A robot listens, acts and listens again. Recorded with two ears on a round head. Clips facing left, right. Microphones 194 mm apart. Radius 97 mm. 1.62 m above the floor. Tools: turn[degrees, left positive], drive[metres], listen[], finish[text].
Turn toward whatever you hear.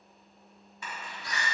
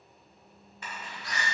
Action: turn[90]
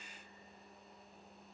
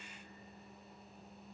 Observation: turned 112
Thought: Nothing new. It was at 20° right.
Action: turn[-20]
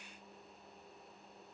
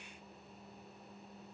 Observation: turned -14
Thought: Nothing new. It was at 10° right.
Action: turn[-10]
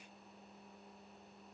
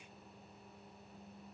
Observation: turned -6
Action: finish[Facing where the door slam came from. I can't hear it now.]